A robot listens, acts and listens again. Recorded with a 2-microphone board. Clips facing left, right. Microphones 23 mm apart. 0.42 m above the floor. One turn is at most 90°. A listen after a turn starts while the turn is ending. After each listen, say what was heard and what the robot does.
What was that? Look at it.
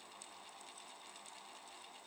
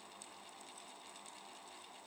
Keep listening.
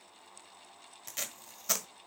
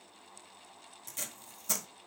The tape being pulled: about 45° left or 135° left. Turn 45° left.
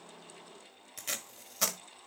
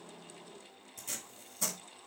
So it is at 85° left. Turn 85° left.
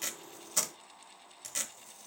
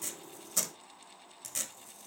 The tape being pulled is now 10° left. Turn 10° left.
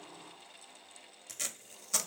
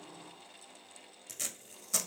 Found it: tape being pulled, straight ahead, 1 to 2 m away.